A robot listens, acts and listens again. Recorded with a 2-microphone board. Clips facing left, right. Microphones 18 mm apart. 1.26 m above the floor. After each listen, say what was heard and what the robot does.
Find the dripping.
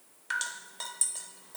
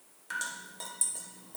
The dripping: about 30° left or 150° left. Turn 30° left.
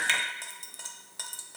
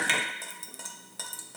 Facing the dripping.